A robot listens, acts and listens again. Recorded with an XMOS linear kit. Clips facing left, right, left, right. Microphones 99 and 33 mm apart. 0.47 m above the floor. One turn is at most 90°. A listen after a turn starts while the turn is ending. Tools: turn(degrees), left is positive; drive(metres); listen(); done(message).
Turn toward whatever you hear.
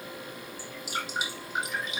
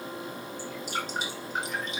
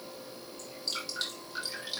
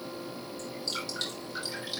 turn(degrees=30)
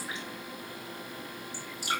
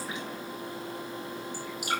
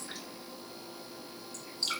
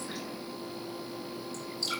turn(degrees=90)
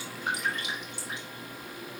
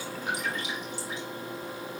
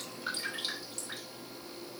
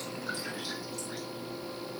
turn(degrees=55)
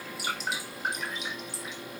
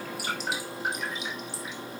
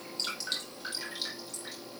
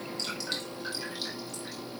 done("Found it: dripping, straight ahead, over 4 m away.")